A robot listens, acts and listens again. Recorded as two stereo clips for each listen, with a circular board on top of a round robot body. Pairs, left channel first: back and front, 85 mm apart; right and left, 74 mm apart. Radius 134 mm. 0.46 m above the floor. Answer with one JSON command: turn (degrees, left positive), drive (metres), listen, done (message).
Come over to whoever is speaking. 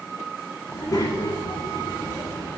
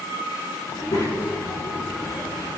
{"turn": -130}
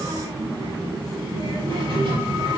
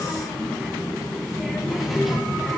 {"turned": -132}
{"drive": 1.0}
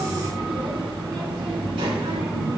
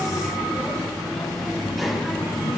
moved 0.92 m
{"drive": 1.0}
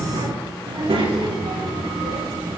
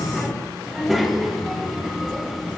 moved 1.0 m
{"drive": 1.0}
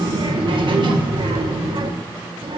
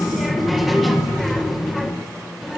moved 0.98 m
{"drive": 1.0}
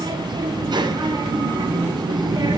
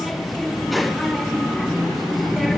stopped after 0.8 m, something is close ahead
{"done": "Arrived at the child speaking, straight ahead."}